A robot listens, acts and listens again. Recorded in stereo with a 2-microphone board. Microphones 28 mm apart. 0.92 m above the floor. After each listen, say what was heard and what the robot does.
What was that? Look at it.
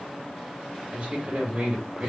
The man speaking: about 55° right or 125° right. Turn 55° right.
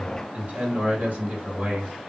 So it is at 60° right. Turn 60° right.
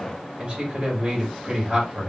The man speaking is now 30° right. Turn 30° right.
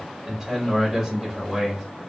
Found it: a man speaking, straight ahead, 2 to 4 m away.